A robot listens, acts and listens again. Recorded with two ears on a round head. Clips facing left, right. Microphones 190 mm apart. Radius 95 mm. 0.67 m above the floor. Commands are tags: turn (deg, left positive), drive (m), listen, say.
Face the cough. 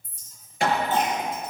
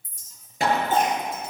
<turn deg="-40"/>
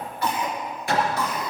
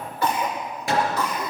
<turn deg="-95"/>
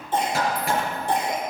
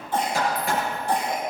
<turn deg="20"/>
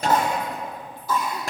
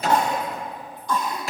<say>Facing the cough, 2 to 4 m away.</say>